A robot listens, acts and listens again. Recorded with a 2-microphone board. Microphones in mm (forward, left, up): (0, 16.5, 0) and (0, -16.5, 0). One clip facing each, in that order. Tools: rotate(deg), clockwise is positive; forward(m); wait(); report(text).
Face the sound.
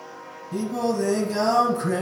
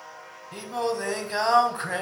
rotate(35)
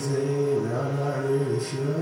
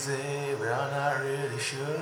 rotate(110)
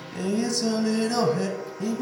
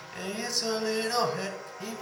rotate(10)
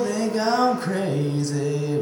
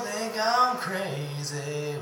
report("Facing the singing, under 1 m away.")